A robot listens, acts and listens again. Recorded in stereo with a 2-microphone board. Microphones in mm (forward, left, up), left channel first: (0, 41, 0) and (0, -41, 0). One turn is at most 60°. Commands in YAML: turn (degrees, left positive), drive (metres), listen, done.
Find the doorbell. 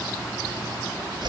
listen: true
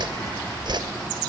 listen: true
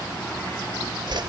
done: "I can't make out a doorbell, only a whoosh."